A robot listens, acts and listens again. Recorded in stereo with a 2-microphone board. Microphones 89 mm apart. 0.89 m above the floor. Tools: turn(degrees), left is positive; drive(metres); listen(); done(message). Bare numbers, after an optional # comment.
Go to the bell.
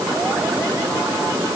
listen()
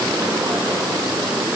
listen()
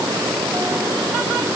done("I can't make out a bell to turn to.")